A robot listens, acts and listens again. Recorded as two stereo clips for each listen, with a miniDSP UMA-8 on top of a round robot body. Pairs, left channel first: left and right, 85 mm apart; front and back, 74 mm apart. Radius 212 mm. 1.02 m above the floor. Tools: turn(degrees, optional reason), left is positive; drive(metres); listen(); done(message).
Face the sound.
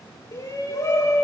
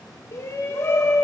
turn(degrees=45, reason="The shout: 45° left.")
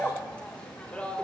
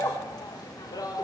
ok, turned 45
turn(degrees=15, reason="The shout is now 15° left.")
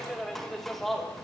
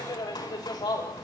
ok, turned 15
done("Found it: a shout, straight ahead.")